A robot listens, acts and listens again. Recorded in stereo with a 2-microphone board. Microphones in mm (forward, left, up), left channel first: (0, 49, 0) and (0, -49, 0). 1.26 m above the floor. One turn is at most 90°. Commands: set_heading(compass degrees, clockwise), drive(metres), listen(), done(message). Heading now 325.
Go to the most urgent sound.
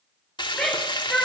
set_heading(295)
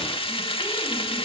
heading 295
listen()
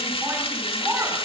set_heading(320)
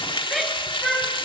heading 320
drive(1.0)
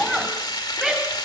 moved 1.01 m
drive(1.0)
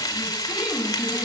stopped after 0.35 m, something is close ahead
listen()
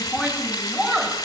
set_heading(330)
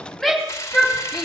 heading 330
done("Something is in my way. I am facing the shout but have not reached it.")